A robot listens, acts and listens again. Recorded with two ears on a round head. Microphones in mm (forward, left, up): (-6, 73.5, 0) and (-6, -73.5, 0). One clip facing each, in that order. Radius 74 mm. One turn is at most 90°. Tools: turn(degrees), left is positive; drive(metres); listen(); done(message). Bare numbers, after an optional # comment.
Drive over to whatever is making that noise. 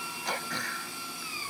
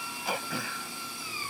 turn(-30)
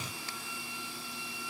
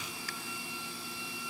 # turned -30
listen()
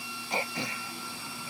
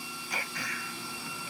# So it is at 25° left.
turn(25)
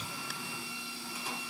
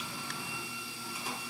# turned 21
listen()
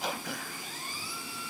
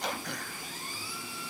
drive(1.0)
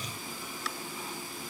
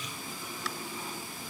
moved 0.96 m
listen()
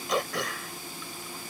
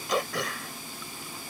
drive(1.0)
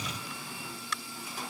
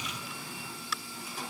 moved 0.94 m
drive(1.0)
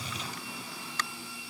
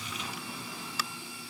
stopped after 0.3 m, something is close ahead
done("Arrived at the throat clearing, straight ahead.")